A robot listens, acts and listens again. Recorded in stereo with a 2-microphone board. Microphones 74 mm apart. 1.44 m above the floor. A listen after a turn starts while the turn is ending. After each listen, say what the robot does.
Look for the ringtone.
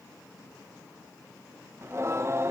Keep listening.
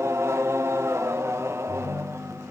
Turn 55° left.
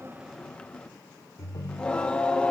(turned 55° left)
Turn 65° left.
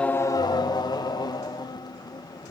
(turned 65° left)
Turn 10° left.
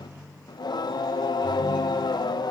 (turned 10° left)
Facing the ringtone, 2 to 4 m away.